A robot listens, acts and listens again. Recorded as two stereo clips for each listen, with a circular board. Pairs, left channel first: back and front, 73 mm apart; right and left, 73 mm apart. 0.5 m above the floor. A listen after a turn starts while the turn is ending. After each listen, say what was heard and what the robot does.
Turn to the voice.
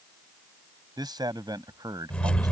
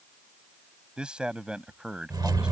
The man speaking: 15° left. Turn 15° left.
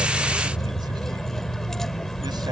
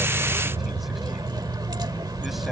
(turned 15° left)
Keep listening.
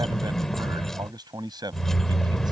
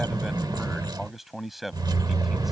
Facing the man speaking.